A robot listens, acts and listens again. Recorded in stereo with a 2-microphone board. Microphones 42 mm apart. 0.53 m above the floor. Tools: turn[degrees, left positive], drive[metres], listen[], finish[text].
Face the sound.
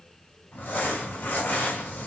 Thought: The crumpling: about 55° left or 125° left.
Action: turn[55]
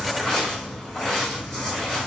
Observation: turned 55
Thought: So it is at 15° left.
Action: turn[15]
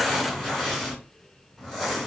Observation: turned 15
Action: finish[Facing the crumpling, 2 to 4 m away.]